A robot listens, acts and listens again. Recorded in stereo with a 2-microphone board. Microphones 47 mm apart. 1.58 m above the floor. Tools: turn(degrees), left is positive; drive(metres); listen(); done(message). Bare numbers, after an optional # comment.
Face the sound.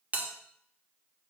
# The bell: about 30° right or 150° right.
turn(-30)
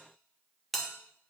done("Found it: a bell, straight ahead, 1 to 2 m away.")